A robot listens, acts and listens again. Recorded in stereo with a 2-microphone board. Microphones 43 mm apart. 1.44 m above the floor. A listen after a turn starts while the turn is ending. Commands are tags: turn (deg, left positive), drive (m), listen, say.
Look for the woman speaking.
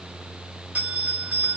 <listen/>
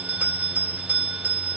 <listen/>
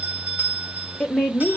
<turn deg="20"/>
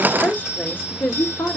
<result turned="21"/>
<turn deg="120"/>
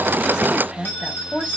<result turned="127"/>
<turn deg="-30"/>
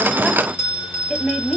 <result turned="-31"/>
<say>Found it: a woman speaking, straight ahead.</say>